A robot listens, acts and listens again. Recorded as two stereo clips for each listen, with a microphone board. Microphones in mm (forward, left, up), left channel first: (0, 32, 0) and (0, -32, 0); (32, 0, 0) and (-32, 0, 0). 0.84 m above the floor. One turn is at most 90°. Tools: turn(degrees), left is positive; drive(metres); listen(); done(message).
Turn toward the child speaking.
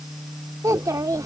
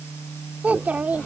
turn(degrees=-90)
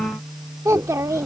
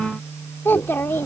turn(degrees=-55)
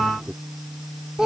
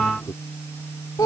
turn(degrees=-10)
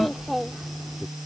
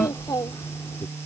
done("Facing the child speaking.")